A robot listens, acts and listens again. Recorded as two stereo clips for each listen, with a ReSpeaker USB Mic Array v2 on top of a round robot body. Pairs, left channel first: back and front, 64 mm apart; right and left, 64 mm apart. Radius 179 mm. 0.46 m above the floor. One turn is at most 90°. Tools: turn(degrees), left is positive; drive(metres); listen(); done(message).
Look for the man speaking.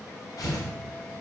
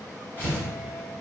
listen()
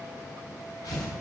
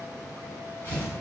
listen()
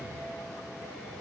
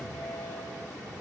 done("I can't make out a man speaking, only tearing paper.")